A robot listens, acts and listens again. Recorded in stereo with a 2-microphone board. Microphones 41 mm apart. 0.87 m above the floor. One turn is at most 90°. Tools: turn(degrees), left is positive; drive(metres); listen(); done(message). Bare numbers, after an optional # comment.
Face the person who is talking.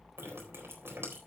listen()
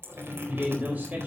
# The man speaking: about 40° right or 140° right.
turn(-40)
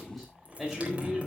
done("Found it: a man speaking, straight ahead, over 4 m away.")